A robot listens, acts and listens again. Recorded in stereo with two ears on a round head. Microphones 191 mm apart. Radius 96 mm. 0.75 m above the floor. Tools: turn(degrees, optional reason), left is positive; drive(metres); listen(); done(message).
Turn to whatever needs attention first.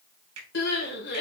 turn(degrees=55, reason="The crying: about 55° left or 125° left.")
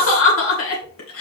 turn(degrees=70, reason="So it is at 70° left.")
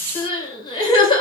turn(degrees=25, reason="The crying is now 25° left.")
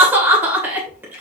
turn(degrees=-10, reason="The crying is now 10° right.")
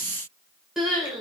done("Found it: crying, straight ahead.")